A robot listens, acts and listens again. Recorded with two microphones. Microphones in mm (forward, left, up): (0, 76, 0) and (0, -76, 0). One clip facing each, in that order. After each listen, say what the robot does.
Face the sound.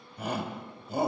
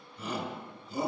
Turn 60° left.
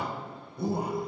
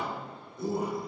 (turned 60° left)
Turn 35° left.
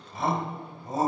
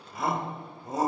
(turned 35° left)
Facing the shout, 1 to 2 m away.